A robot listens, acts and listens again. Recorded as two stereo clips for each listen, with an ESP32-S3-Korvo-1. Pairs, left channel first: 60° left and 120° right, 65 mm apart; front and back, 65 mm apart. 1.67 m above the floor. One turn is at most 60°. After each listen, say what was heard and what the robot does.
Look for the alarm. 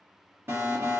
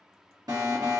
The alarm: 170° right. Turn 60° right.
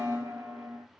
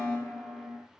The alarm is now 95° right. Turn 60° right.
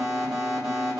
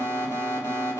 The alarm is now 45° right. Turn 45° right.
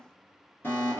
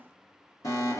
The alarm is now 10° left. Turn 10° left.
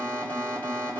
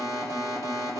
Facing the alarm.